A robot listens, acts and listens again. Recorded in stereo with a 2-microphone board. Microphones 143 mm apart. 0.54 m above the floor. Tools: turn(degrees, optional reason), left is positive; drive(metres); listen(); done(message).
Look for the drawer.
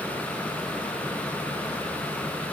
listen()
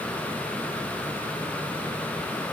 listen()
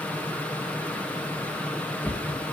turn(degrees=30)
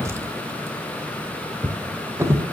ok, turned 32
turn(degrees=-20, reason="So it is at 20° right.")
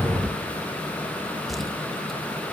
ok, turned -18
done("Found it: a drawer, straight ahead, 1 to 2 m away.")